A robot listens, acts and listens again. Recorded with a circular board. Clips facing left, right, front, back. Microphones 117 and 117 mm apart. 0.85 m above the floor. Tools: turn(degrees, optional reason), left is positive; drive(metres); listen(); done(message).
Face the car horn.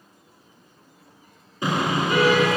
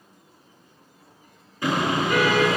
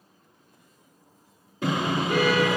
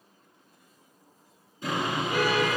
turn(degrees=20, reason="The car horn: 20° left.")
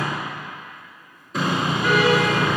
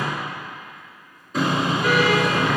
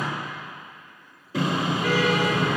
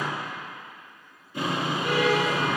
done("Facing the car horn.")